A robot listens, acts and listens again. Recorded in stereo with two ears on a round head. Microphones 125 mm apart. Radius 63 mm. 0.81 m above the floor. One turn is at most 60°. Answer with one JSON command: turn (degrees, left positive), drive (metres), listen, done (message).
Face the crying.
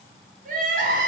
{"turn": -60}
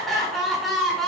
{"done": "Found it: crying, straight ahead."}